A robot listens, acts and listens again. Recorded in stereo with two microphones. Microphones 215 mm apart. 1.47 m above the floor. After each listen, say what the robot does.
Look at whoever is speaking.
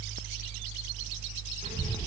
Turn 30° right.
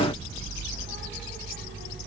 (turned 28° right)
Turn 115° right.
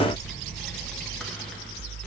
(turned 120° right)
Facing the child speaking, 1 to 2 m away.